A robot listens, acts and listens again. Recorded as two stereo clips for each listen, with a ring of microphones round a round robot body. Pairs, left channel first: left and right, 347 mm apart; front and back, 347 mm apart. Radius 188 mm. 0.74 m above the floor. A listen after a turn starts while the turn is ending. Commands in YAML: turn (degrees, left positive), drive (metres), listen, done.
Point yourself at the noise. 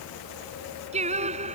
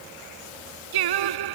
turn: -165
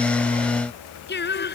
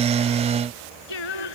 turn: 30
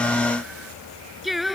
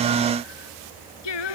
done: "Found it: singing, straight ahead."